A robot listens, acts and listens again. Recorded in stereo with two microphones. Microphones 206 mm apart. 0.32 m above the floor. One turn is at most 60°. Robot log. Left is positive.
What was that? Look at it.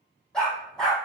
cmd yaw +30
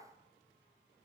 cmd idle
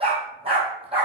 note: So it is at 25° right.
cmd yaw -25
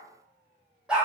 end: Found it: a dog barking, straight ahead, 2 to 4 m away.